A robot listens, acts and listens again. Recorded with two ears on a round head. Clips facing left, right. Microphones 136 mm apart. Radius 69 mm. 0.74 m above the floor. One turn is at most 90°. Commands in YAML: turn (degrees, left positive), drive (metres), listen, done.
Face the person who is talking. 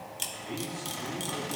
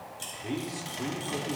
turn: -70
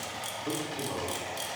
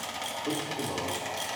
turn: -10
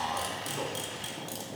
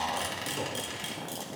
listen: true
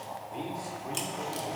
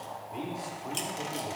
done: "Facing the man speaking, 1 to 2 m away."